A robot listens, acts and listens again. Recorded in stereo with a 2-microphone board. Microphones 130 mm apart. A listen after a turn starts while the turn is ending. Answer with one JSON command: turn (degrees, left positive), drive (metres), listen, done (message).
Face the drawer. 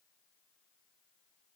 {"listen": true}
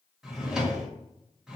{"turn": -30}
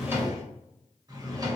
{"turn": -150}
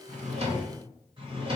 {"turn": -40}
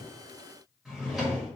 {"done": "Facing the drawer."}